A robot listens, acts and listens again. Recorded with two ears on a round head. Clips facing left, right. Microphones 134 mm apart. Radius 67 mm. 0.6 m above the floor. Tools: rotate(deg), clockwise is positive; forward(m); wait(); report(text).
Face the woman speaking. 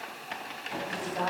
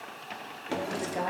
rotate(25)
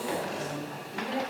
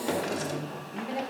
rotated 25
report("Facing the woman speaking, 2 to 4 m away.")